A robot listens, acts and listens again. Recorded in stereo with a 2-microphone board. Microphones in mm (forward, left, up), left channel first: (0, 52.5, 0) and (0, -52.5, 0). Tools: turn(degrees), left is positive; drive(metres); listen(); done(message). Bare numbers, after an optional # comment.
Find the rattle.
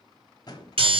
# The rattle: about 40° left or 140° left.
turn(40)
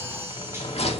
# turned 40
# So it is at 100° left.
turn(100)
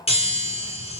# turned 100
listen()
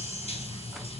listen()
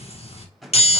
done("Found it: a rattle, straight ahead.")